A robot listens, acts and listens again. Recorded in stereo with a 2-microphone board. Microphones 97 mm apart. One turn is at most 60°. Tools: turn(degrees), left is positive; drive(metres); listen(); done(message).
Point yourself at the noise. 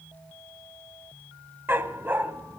turn(degrees=-20)
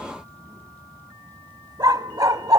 turn(degrees=-60)
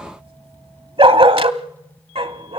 turn(degrees=-60)
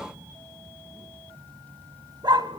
turn(degrees=-50)
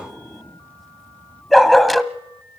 done("Facing the dog barking, under 1 m away.")